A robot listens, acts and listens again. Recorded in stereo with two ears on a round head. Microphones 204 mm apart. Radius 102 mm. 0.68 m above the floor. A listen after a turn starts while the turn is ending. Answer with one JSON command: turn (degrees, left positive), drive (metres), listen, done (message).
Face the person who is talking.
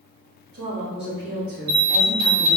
{"turn": -45}
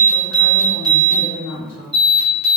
{"turn": -15}
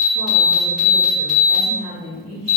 {"done": "Facing the woman speaking, 1 to 2 m away."}